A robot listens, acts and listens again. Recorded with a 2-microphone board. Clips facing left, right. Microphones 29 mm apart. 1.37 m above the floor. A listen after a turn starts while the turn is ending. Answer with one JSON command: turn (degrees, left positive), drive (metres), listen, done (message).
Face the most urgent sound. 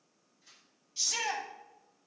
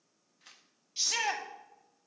{"turn": -30}
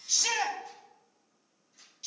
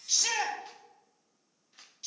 {"done": "Found it: a shout, straight ahead, 1 to 2 m away."}